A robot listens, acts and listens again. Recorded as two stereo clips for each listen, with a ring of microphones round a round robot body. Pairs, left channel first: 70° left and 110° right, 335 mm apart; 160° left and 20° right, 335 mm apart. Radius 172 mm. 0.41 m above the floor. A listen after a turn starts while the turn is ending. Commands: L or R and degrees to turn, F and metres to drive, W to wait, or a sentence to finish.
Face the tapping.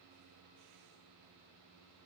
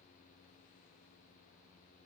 W
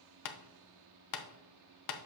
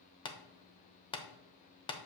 L85
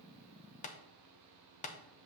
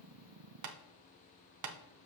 Found it: tapping, straight ahead.